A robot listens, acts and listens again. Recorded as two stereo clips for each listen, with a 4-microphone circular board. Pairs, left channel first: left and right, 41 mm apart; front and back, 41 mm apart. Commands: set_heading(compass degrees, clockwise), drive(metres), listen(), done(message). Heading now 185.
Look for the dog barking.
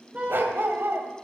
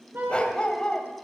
set_heading(250)
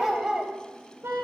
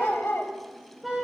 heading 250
set_heading(265)
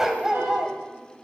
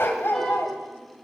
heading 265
set_heading(280)
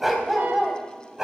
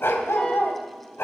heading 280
set_heading(295)
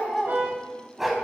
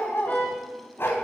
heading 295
set_heading(305)
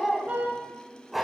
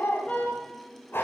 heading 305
done("Found it: a dog barking, straight ahead, 2 to 4 m away.")